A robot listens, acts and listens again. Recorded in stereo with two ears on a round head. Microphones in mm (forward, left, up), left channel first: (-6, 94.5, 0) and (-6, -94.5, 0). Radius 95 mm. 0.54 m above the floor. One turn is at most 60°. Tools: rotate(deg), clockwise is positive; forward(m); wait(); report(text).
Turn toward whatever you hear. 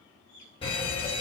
rotate(-25)
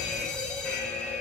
report("Found it: a fire alarm, straight ahead, 2 to 4 m away.")